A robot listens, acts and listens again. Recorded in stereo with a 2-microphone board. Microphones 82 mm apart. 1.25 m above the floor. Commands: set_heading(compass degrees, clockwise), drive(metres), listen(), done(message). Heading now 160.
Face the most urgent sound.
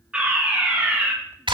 set_heading(190)
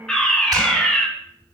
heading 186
set_heading(176)
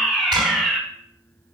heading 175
done("Found it: a fire alarm, straight ahead, 2 to 4 m away.")